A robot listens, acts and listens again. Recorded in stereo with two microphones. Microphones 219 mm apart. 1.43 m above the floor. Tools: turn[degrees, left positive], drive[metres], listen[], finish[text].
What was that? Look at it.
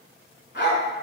Thought: The dog barking: about 50° left or 130° left.
Action: turn[50]
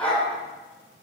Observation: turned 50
Action: finish[Facing the dog barking, 2 to 4 m away.]